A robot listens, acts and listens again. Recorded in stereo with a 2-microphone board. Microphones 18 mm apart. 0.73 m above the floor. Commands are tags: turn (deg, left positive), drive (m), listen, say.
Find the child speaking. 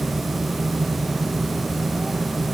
<listen/>
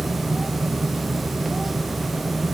<listen/>
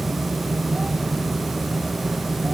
<say>I can't make out a child speaking.</say>